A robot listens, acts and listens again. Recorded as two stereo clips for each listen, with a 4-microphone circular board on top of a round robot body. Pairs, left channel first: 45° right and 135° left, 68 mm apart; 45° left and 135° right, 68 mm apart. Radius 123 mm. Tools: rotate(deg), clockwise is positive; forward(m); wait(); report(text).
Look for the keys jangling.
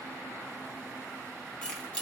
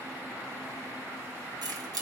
rotate(120)
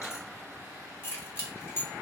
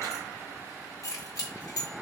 rotate(-10)
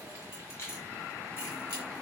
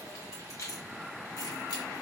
rotate(-10)
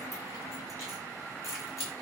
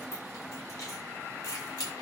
report("Facing the keys jangling, over 4 m away.")